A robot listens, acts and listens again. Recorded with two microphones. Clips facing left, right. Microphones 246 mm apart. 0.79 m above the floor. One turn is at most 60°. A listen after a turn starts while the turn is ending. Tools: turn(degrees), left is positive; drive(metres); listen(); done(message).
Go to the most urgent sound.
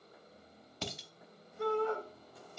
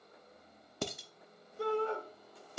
turn(degrees=-35)
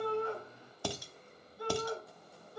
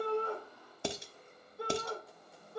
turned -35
turn(degrees=-60)
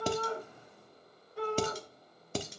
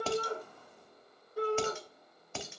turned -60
turn(degrees=-45)
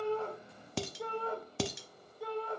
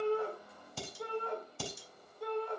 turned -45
drive(metres=1.0)
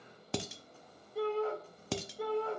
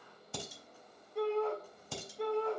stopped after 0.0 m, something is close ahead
done("Something is in my way. I am facing the shout but have not reached it.")